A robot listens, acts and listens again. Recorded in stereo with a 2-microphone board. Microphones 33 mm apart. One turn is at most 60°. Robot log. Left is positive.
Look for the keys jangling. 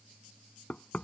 cmd idle
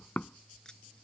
note: The keys jangling: about 20° left or 160° left.
cmd yaw +20
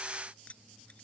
note: The keys jangling: about 40° left or 140° left.
cmd yaw +40
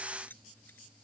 note: So it is at 100° left.
cmd yaw +60
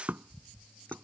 note: Nothing new. It was at 40° left.
cmd yaw +40
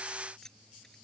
note: The keys jangling is now 15° left.
cmd yaw +15
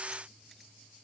cmd idle
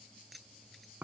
end: Found it: keys jangling, straight ahead.